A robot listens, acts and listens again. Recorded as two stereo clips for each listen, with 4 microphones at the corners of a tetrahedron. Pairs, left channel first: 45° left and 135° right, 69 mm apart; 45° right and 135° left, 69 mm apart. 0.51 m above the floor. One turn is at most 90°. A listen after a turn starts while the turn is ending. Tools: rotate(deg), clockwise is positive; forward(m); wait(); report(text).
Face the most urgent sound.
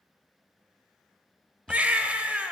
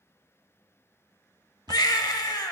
rotate(65)
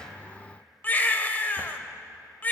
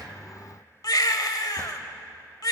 rotate(20)
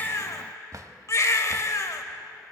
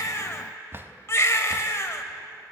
report("Facing the baby crying, under 1 m away.")